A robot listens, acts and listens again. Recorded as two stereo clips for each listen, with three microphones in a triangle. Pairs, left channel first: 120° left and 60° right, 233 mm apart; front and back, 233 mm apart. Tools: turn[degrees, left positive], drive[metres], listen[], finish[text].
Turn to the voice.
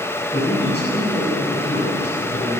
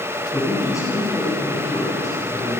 Thought: The man speaking: 75° left.
Action: turn[75]
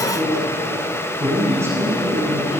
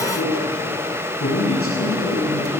Thought: The man speaking is now 20° left.
Action: turn[20]
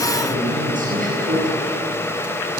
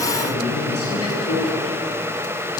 Action: finish[Found it: a man speaking, straight ahead, over 4 m away.]